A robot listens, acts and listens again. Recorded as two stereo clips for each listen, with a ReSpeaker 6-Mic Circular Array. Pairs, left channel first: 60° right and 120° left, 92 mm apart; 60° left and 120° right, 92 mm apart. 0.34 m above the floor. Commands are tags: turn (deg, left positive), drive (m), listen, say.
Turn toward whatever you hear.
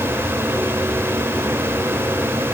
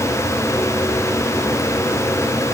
<listen/>
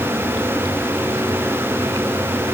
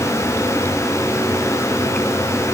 <listen/>
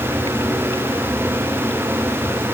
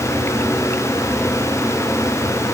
<say>I can't make out anything.</say>